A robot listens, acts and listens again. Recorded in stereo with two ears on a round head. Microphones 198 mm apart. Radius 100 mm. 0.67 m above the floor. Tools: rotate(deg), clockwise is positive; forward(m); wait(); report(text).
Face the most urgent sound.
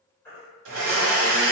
rotate(-30)
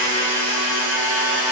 wait()
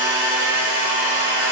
wait()
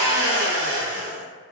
report("I heard a baby crying, but can't make it out now. It was about 20° right or 140° left.")